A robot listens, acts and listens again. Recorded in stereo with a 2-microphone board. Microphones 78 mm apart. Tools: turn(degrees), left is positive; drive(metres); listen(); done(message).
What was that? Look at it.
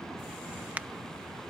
turn(degrees=-20)
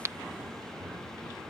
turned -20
turn(degrees=-135)
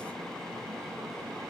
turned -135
done("I heard a crack from this way, but can't make it out now.")